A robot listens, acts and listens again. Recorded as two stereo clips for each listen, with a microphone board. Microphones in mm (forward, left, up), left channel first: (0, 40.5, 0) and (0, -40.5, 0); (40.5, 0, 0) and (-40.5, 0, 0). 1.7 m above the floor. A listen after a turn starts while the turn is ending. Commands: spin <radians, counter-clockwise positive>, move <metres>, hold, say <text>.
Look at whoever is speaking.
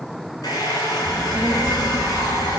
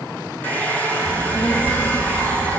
spin -0.26
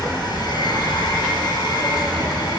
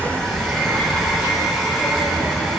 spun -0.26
say Found it: a child speaking, straight ahead.